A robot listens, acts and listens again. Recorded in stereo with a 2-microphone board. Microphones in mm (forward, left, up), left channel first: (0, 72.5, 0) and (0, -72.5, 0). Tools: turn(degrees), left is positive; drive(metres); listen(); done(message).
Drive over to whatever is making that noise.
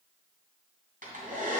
turn(degrees=-70)
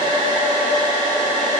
turn(degrees=-30)
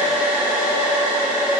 turn(degrees=-15)
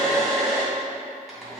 drive(metres=1.0)
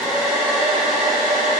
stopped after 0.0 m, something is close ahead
done("Blocked. The hair dryer is further on, straight ahead.")